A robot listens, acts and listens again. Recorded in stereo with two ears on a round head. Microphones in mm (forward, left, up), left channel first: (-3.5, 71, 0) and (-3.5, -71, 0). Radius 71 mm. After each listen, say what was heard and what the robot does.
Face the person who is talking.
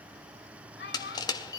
The child speaking: about 75° left or 105° left. Turn 75° left.
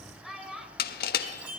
Found it: a child speaking, straight ahead.